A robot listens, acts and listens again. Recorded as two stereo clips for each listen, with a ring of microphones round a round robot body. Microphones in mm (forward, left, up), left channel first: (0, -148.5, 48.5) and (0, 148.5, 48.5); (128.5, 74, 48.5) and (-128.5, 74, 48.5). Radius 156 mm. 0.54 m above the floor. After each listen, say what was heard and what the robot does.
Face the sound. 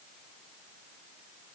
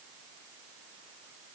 Keep listening.
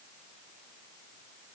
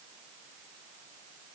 Keep listening.
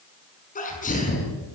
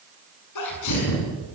The sneeze: 25° right. Turn 25° right.
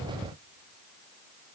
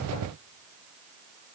Facing where the sneeze came from. I can't hear it now.